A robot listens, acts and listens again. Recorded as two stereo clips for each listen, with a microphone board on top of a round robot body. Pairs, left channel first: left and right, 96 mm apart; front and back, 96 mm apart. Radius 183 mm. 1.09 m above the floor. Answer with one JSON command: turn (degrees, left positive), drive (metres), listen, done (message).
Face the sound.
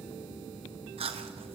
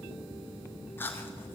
{"turn": -70}
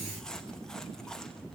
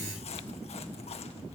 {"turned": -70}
{"done": "Found it: chewing, straight ahead."}